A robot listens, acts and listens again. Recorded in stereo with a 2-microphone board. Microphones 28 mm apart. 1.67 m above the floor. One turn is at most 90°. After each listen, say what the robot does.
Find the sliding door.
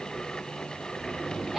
Turn 60° right.
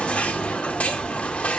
Facing the sliding door.